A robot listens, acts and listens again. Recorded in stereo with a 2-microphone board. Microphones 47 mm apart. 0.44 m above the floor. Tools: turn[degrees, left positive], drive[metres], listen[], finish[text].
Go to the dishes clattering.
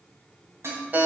Thought: The dishes clattering: about 65° right or 115° right.
Action: turn[-65]
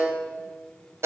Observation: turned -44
Action: listen[]
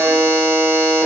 Action: listen[]
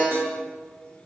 Action: finish[I heard dishes clattering, but can't make it out now. It was about 20° right or 70° right. I did not reach it.]